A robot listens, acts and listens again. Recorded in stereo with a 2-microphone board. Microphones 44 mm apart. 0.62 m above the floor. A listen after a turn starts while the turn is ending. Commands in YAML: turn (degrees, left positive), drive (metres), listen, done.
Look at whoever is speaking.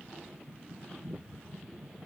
listen: true
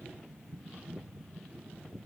listen: true
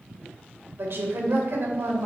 turn: -65
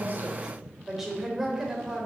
turn: -10
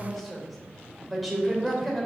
done: "Facing the woman speaking, 2 to 4 m away."